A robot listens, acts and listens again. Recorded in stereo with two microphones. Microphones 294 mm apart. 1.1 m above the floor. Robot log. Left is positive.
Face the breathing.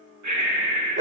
cmd yaw -90
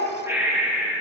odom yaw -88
note: So it is at 10° right.
cmd yaw -10
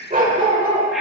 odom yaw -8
cmd idle
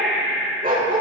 end: Found it: breathing, straight ahead, 1 to 2 m away.